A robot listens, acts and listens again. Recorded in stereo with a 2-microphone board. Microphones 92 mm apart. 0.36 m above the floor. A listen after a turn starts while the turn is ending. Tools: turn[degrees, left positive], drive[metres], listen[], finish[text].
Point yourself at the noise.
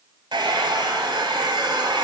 Thought: The hair dryer: about 55° right or 125° right.
Action: turn[-55]
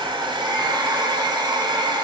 Thought: So it is at 60° right.
Action: turn[-60]
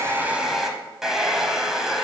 Action: finish[Facing the hair dryer, 1 to 2 m away.]